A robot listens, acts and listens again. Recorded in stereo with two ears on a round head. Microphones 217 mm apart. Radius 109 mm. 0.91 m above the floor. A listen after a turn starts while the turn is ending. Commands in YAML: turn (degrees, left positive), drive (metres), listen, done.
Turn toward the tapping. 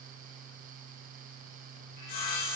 listen: true
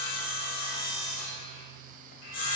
listen: true
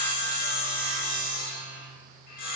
done: "I can't make out tapping to turn to."